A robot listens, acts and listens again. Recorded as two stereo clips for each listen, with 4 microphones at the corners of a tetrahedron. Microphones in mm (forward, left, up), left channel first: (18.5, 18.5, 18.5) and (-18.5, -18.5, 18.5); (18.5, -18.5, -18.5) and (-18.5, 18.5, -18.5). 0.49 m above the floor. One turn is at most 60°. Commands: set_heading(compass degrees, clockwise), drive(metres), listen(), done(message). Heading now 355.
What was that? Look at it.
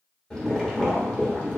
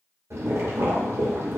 set_heading(295)
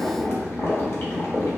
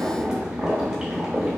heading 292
set_heading(232)
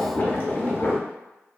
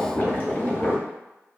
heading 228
done("Found it: boiling, straight ahead.")